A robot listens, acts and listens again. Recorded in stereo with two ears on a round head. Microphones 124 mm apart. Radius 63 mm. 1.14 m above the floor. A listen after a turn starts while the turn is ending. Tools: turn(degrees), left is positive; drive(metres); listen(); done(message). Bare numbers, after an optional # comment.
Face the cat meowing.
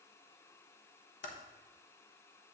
listen()
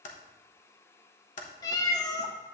# The cat meowing: about 25° left or 155° left.
turn(25)
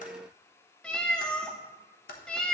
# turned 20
# So it is at 10° left.
turn(10)
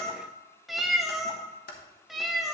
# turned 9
done("Found it: a cat meowing, straight ahead, under 1 m away.")